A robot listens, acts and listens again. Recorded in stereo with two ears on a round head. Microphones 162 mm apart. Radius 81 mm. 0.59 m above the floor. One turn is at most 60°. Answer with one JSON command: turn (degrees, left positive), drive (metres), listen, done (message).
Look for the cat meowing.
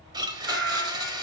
{"turn": -60}
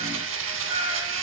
{"turn": -30}
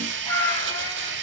{"turn": 15}
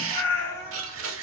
{"turn": 15}
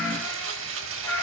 {"turn": 15}
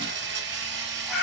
{"done": "Facing the cat meowing, 2 to 4 m away."}